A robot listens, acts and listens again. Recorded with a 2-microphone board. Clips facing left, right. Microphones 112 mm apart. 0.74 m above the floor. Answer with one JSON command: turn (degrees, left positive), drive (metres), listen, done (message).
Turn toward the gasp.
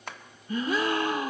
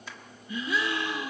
{"turn": 45}
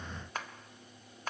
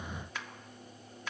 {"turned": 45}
{"listen": true}
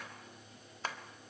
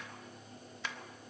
{"done": "I heard a gasp, but can't make it out now. It was about straight ahead or 90° left."}